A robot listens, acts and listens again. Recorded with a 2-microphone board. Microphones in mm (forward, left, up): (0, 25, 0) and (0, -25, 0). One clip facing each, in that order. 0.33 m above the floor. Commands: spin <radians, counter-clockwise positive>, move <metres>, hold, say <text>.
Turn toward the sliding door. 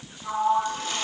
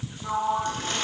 spin -0.52
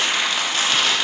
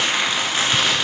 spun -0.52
hold
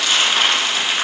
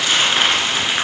hold
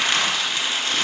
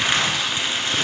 say I heard a sliding door, but can't make it out now. It was about 20° left or 140° right.